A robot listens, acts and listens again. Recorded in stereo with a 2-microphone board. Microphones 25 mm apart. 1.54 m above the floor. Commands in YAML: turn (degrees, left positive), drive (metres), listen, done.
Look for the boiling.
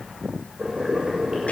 turn: -35
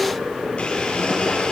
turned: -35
turn: -110
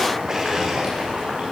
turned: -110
turn: -40
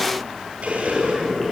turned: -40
turn: 15
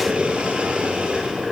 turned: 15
done: "Found it: boiling, straight ahead."